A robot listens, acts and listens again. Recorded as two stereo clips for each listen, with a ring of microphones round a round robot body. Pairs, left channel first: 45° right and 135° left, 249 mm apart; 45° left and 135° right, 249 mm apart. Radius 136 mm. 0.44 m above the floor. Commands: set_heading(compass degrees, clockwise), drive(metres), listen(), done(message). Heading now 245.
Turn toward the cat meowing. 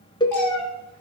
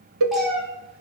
set_heading(290)
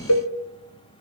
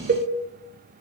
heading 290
listen()
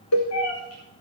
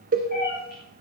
set_heading(300)
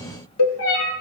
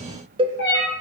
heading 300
done("Found it: a cat meowing, straight ahead.")